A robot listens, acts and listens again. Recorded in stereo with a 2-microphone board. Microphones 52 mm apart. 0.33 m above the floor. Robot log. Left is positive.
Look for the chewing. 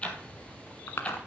note: The chewing: about 60° left or 120° left.
cmd yaw +60
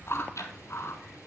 note: So it is at 60° left.
cmd yaw +60
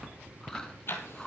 note: The chewing is now 15° left.
cmd yaw +15
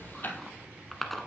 end: Facing the chewing.